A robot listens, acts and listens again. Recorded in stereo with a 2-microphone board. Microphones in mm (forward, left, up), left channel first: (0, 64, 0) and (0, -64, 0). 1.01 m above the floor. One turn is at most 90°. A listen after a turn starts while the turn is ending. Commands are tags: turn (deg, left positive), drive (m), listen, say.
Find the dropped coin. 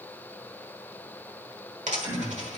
<turn deg="-75"/>
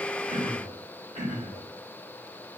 <listen/>
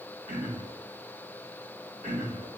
<say>I heard a dropped coin, but can't make it out now. It was about straight ahead or 30° right.</say>